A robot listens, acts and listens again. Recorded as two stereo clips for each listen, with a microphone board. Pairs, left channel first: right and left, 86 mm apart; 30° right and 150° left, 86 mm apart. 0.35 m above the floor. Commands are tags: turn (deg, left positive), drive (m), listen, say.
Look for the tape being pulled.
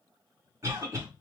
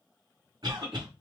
<listen/>
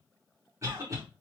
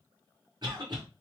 <listen/>
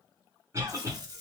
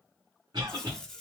<turn deg="55"/>
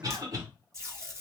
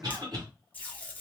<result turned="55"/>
<turn deg="40"/>
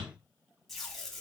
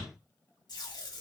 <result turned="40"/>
<say>Found it: tape being pulled, straight ahead, 1 to 2 m away.</say>